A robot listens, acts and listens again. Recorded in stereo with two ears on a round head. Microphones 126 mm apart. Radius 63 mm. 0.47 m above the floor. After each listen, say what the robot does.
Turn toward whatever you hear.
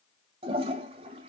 Turn 45° right.
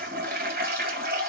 Turn 85° right.
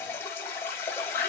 Turn 20° left.
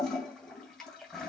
Found it: a toilet flushing, straight ahead, 2 to 4 m away.